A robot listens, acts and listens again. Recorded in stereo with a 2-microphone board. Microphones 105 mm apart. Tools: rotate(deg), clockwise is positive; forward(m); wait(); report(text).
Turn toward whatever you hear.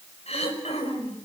rotate(-90)
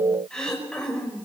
report("Facing the throat clearing.")